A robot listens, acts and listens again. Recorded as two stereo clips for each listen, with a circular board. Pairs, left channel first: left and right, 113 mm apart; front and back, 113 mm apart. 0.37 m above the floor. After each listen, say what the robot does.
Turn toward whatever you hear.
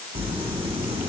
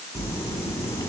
Turn 60° right.
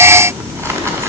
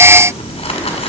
Turn 25° right.
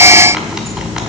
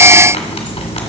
Found it: crumpling, straight ahead, 1 to 2 m away.